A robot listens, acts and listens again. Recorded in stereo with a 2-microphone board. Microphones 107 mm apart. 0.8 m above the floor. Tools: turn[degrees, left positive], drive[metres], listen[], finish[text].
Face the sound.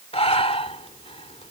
Thought: The breathing: about 70° left or 110° left.
Action: turn[70]
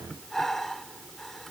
Action: finish[Facing the breathing.]